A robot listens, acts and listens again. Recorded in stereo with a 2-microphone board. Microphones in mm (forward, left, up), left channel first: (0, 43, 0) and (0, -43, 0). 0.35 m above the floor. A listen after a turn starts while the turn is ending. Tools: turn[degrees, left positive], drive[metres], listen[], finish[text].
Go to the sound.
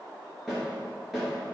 Action: turn[-30]
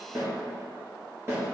Thought: So it is at 150° right.
Action: turn[-150]
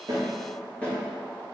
Thought: The snare drum is now 15° left.
Action: turn[15]
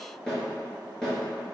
Action: drive[1.0]
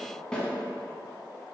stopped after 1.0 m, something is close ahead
Thought: The snare drum is now 10° left.
Action: turn[10]
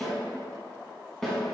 Action: finish[Arrived at the snare drum, straight ahead.]